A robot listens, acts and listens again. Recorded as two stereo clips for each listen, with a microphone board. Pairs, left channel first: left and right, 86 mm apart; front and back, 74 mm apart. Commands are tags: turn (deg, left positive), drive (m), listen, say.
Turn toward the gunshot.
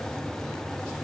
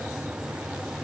<listen/>
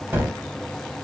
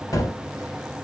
<turn deg="-25"/>
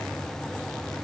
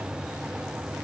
<say>Facing where the gunshot came from. I can't hear it now.</say>